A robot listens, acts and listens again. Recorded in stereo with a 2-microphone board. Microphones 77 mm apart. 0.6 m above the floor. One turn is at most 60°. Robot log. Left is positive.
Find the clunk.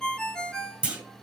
note: The clunk: about 15° right or 165° right.
cmd yaw -15
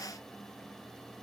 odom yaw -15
cmd idle
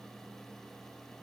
end: I heard a clunk, but can't make it out now. It was about straight ahead or 150° right.